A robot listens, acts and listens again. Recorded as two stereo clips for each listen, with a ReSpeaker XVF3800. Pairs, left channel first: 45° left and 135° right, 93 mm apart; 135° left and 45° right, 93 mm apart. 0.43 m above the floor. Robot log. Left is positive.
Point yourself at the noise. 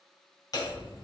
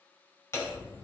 note: The hammering: 80° left.
cmd yaw +80
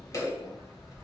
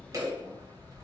end: Facing the hammering, 2 to 4 m away.